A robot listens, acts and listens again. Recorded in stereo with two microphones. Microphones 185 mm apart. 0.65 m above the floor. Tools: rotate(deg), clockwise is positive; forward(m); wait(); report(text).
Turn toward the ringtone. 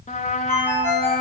rotate(-30)
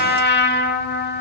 wait()
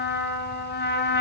wait()
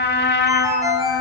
rotate(15)
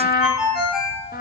report("Facing the ringtone.")